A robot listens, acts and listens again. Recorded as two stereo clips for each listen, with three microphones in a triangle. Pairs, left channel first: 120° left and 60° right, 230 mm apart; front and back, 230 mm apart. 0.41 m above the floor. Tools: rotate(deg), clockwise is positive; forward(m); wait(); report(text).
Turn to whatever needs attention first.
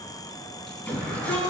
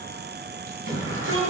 rotate(155)
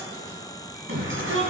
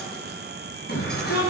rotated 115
rotate(40)
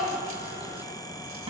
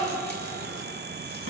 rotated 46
wait()
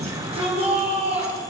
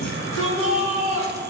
report("Found it: a shout, straight ahead.")